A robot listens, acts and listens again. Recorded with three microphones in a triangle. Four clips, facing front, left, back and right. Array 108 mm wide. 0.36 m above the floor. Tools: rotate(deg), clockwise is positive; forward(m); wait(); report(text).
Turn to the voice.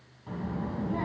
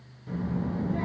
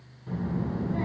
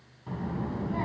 rotate(60)
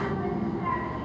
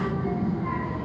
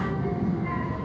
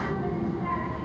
report("Found it: a child speaking, straight ahead, 2 to 4 m away.")